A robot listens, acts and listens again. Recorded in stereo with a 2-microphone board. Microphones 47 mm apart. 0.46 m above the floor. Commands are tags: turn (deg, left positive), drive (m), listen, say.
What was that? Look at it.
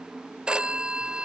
<turn deg="-25"/>
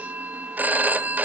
<turn deg="-130"/>
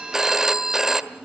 <turn deg="-10"/>
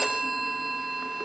<say>Found it: a phone ringing, straight ahead, 1 to 2 m away.</say>